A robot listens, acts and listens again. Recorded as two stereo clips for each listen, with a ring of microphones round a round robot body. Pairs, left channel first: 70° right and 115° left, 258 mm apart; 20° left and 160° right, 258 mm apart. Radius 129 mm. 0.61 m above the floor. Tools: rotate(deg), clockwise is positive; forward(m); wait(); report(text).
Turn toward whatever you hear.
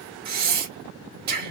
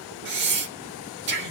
rotate(-160)
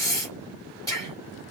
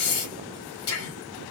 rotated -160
rotate(-10)
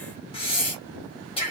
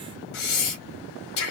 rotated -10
report("Found it: breathing, straight ahead.")